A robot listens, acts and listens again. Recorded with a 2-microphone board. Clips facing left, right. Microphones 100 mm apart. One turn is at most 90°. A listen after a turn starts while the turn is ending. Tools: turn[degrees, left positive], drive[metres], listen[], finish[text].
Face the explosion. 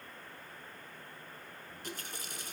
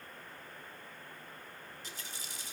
Action: listen[]
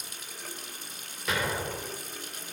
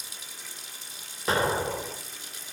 Thought: The explosion: about 35° right or 145° right.
Action: turn[-35]
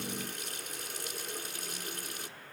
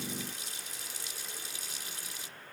Action: listen[]
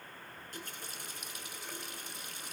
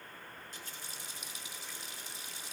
Action: finish[I heard an explosion, but can't make it out now. It was about straight ahead or 110° right.]